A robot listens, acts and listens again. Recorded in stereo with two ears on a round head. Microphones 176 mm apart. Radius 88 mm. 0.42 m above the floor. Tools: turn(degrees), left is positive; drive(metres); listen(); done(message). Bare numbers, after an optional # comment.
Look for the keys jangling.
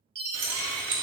# The keys jangling: about 60° right or 120° right.
turn(-60)
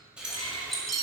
done("Facing the keys jangling.")